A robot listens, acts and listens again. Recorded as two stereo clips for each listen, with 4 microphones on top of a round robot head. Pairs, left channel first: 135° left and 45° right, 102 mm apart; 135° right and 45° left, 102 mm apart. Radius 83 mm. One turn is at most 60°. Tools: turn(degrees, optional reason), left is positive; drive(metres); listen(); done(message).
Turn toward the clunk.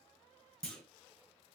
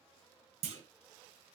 turn(degrees=55, reason="The clunk: 55° left.")
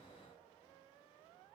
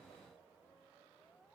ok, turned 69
turn(degrees=-15, reason="Nothing new. It was at 15° right.")
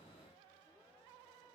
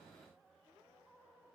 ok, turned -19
done("Facing where the clunk came from. I can't hear it now.")